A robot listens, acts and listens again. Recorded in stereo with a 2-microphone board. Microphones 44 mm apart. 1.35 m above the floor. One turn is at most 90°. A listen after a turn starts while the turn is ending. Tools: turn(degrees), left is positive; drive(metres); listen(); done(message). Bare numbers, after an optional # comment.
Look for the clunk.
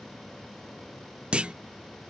# The clunk: about 25° right or 155° right.
turn(-25)
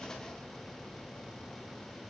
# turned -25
listen()
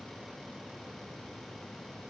done("I heard a clunk, but can't make it out now. It was about straight ahead or 130° right.")